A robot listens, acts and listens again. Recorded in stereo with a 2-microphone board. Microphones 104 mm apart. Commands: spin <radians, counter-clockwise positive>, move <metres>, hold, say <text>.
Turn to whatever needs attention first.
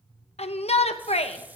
spin 1.57
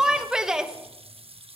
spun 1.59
say Found it: a shout, straight ahead, 1 to 2 m away.